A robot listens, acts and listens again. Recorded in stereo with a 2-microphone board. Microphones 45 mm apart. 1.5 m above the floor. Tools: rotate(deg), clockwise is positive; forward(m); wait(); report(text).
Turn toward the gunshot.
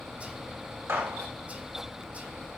rotate(90)
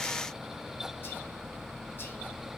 report("I heard a gunshot from this way, but can't make it out now.")